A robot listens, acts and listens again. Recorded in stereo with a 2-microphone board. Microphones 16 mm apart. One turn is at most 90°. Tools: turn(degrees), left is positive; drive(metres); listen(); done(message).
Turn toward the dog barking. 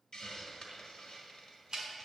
listen()
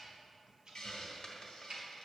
listen()
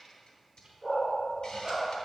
turn(degrees=-30)
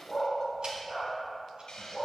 turn(degrees=-90)
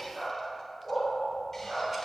turn(degrees=-50)
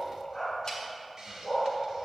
turn(degrees=20)
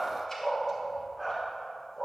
done("Found it: a dog barking, straight ahead.")